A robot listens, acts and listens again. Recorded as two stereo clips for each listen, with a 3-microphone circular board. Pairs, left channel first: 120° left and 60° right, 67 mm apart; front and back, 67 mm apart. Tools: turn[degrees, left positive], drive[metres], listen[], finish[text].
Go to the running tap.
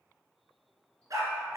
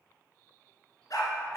Action: listen[]
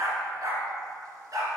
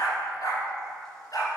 Action: listen[]
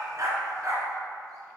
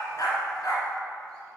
Action: finish[I can't make out a running tap, only a dog barking.]